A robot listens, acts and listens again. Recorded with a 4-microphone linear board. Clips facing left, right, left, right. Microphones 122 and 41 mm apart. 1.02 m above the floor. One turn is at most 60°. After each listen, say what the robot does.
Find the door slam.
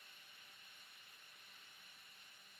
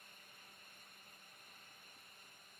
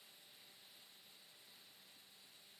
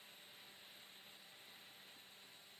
Keep listening.
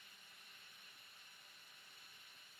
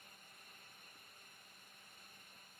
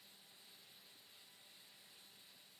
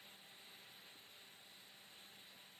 Keep listening.
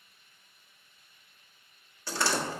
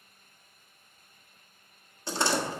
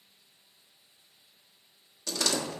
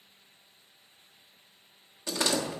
Turn 20° right.
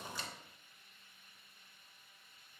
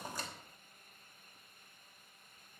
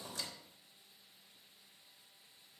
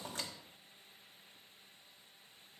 Turn 60° right.
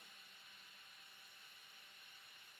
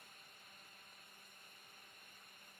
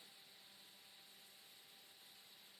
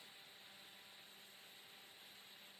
Turn 60° right.
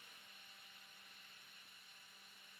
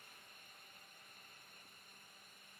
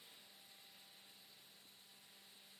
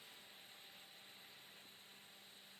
Turn 20° right.
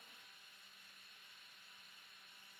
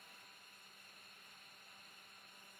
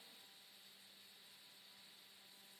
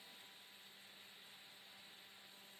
I heard a door slam from this way, but can't make it out now.